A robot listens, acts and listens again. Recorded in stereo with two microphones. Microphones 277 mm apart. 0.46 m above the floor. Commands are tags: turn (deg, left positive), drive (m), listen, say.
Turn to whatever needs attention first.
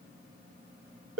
<listen/>
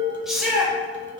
<turn deg="30"/>
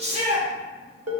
<turn deg="-30"/>
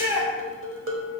<turn deg="-10"/>
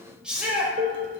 <say>Facing the shout.</say>